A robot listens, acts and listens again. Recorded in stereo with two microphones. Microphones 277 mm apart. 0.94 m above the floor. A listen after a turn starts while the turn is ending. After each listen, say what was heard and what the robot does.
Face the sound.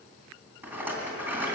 Turn 30° right.
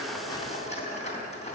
So it is at 25° left. Turn 25° left.
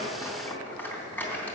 Facing the rattle, 2 to 4 m away.